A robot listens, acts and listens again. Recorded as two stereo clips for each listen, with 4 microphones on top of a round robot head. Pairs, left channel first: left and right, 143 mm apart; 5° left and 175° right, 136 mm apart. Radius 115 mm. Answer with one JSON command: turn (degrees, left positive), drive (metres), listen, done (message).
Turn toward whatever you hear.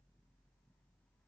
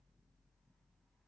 {"listen": true}
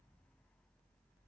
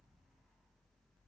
{"listen": true}
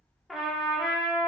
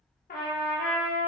{"done": "Facing the trumpet, under 1 m away."}